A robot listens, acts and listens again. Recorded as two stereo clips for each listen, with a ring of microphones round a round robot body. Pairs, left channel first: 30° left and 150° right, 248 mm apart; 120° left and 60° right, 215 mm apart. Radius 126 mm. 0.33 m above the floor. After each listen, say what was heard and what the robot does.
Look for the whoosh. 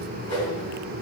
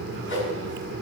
The whoosh: 100° left. Turn 100° left.
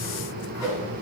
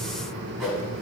The whoosh is now 30° left. Turn 30° left.
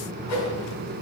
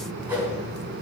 The whoosh is now 20° left. Turn 20° left.
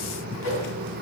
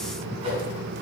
Found it: a whoosh, straight ahead.